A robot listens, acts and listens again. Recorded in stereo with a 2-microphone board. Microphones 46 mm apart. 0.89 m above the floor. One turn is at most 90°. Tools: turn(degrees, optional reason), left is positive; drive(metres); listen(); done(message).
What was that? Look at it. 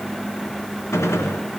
turn(degrees=90)
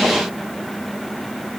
done("Facing where the gunshot came from. I can't hear it now.")